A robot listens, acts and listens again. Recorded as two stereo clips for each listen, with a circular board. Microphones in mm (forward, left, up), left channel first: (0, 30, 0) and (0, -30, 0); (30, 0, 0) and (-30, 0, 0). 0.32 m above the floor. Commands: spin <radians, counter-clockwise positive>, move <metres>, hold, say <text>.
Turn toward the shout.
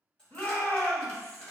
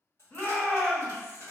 spin 0.96
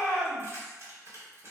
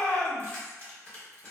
spin -0.35
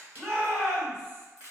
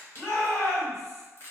say Facing the shout, 1 to 2 m away.